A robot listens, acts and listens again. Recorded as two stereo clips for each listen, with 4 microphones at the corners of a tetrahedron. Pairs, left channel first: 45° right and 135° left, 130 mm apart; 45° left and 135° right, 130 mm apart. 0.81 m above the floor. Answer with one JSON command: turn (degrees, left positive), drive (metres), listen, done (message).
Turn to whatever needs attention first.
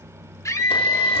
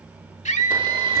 {"turn": 20}
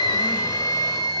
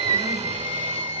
{"done": "Found it: a scream, straight ahead, 2 to 4 m away."}